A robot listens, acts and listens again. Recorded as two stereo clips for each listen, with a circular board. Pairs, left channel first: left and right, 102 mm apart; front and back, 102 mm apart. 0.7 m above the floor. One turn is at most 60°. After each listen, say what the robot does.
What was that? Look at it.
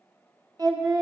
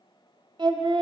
Turn 60° right.
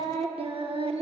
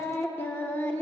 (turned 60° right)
Turn 60° right.
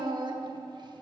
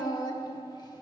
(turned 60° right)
Turn 50° right.
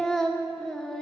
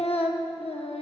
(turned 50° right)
Found it: singing, straight ahead, under 1 m away.